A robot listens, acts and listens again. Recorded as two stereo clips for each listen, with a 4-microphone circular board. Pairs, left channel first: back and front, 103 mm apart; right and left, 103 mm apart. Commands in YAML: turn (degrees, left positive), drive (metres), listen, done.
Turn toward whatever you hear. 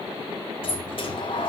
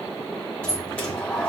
turn: -165
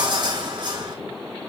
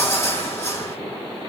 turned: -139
turn: -30
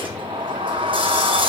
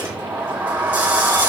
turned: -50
turn: 20
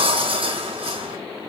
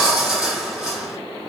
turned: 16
done: "Found it: a sliding door, straight ahead, 2 to 4 m away."